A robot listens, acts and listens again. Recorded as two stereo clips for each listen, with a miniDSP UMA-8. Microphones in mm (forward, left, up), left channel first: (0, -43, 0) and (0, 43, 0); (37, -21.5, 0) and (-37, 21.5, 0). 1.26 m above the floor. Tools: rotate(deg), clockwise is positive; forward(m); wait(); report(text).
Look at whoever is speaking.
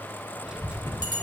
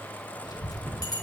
rotate(-10)
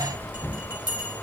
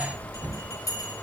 report("Found it: a child speaking, straight ahead, under 1 m away.")